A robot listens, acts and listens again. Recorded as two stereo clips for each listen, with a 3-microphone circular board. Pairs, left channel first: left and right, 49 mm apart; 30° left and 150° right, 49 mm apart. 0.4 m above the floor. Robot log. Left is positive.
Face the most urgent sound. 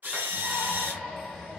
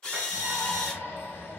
end: Facing the shout.